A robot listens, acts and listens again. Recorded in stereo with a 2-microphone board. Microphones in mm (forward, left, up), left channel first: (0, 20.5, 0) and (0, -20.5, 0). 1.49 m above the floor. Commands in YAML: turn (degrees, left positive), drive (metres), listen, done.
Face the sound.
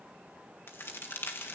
turn: 70
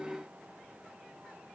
listen: true
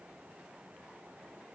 done: "I heard a crack, but can't make it out now. It was about straight ahead or 40° left."